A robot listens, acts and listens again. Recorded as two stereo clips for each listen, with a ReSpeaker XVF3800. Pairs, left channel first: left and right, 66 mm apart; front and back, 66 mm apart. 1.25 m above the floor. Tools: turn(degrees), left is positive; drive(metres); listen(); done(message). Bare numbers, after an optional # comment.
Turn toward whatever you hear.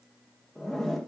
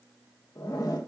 done("Found it: a zipper, straight ahead.")